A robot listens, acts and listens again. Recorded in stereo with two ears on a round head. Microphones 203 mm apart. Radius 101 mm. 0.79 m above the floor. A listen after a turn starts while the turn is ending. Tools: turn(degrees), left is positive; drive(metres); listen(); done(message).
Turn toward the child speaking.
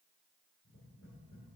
listen()
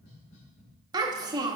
turn(degrees=-20)
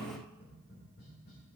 listen()
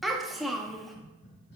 done("Facing the child speaking, under 1 m away.")